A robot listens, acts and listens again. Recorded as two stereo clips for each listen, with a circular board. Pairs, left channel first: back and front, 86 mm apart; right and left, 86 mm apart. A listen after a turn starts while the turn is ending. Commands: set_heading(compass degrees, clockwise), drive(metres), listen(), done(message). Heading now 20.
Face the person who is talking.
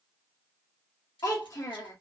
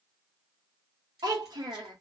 set_heading(255)
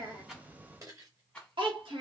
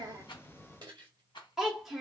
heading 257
done("Found it: a child speaking, straight ahead.")